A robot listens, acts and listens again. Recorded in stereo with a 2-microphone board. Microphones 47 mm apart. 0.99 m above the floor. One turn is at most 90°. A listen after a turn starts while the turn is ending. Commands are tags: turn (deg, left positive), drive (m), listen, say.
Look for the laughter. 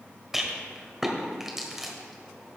<listen/>
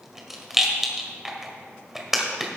<listen/>
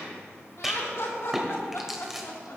<turn deg="65"/>
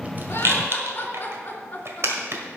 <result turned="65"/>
<turn deg="45"/>
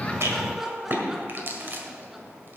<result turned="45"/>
<turn deg="-10"/>
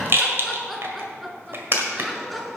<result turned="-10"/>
<say>Facing the laughter.</say>